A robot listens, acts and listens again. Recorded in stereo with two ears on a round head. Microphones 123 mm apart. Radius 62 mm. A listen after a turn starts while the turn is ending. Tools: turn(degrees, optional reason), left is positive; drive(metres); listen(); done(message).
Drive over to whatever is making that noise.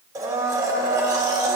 turn(degrees=-25, reason="The blender: about 25° right or 155° right.")
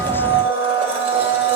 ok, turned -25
turn(degrees=-125, reason="So it is at 125° right.")
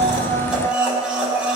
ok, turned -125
turn(degrees=-10, reason="The blender is now 10° right.")
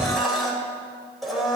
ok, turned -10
drive(metres=1.0)
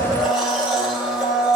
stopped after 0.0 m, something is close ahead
done("Something is in my way. I am facing the blender but have not reached it.")